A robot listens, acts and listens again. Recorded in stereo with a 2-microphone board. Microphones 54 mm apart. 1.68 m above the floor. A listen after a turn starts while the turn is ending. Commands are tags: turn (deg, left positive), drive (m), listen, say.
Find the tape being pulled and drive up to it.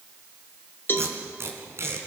<turn deg="-55"/>
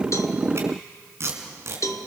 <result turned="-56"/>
<turn deg="-60"/>
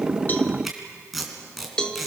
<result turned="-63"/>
<drive m="1.0"/>
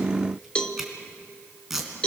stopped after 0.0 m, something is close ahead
<say>Blocked. The tape being pulled is further on, straight ahead.</say>